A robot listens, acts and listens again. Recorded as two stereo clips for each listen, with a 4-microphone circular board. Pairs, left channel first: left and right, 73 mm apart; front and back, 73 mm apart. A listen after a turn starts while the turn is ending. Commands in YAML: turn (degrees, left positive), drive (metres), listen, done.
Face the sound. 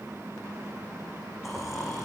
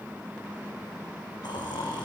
done: "Found it: snoring, straight ahead."